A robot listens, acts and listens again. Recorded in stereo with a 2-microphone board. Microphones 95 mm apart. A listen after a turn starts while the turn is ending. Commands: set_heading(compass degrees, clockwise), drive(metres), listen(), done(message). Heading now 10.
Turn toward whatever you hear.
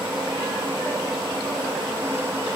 listen()
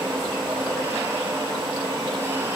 listen()
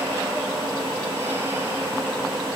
done("I can't make out anything.")